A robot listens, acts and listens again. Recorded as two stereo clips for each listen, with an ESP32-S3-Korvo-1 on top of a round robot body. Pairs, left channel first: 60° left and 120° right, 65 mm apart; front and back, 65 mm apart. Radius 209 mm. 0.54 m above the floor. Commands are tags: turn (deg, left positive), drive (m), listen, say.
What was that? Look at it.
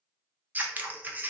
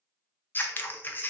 <turn deg="-60"/>
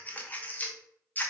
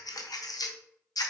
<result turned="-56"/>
<say>Facing the scissors.</say>